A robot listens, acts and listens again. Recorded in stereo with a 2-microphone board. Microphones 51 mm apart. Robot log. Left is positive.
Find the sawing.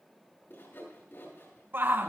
note: The sawing: about 60° left or 120° left.
cmd yaw +60
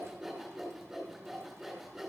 end: Facing the sawing.